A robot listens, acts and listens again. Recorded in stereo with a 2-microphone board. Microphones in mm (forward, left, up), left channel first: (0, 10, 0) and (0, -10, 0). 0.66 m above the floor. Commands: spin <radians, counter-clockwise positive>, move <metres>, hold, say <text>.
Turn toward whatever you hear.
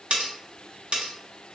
spin -0.96
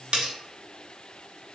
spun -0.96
spin -1.13
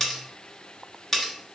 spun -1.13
spin 0.17
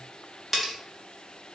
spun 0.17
say Found it: cutlery clinking, straight ahead.